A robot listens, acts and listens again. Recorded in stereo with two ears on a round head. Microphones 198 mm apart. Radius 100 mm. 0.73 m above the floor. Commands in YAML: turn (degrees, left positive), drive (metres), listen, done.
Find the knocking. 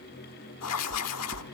turn: -65
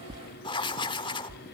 turn: -35
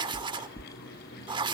turn: 10
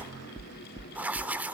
done: "Found it: knocking, straight ahead."